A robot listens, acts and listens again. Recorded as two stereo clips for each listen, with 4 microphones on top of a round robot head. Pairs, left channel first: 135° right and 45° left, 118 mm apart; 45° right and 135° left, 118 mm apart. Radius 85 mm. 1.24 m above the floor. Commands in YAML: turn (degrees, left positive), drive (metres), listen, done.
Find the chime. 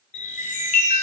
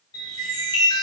turn: -105
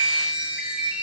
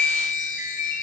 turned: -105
turn: -35
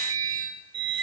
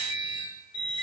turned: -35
done: "Facing the chime."